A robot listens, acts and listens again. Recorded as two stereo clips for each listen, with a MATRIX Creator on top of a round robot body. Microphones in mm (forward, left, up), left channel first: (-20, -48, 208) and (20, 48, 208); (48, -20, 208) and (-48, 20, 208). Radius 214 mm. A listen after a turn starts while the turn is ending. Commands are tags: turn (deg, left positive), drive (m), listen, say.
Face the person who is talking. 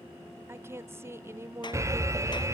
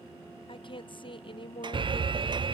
<say>Facing the woman speaking.</say>